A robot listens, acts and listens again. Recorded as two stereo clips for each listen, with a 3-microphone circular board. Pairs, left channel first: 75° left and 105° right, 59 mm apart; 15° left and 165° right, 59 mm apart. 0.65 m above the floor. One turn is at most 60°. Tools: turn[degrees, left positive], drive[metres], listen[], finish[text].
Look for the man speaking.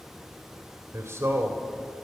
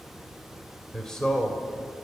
Thought: The man speaking: 60° right.
Action: turn[-60]
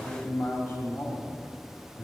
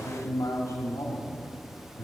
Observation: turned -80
Thought: The man speaking is now 30° left.
Action: turn[30]
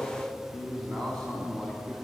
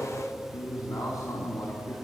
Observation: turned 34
Action: finish[Found it: a man speaking, straight ahead, over 4 m away.]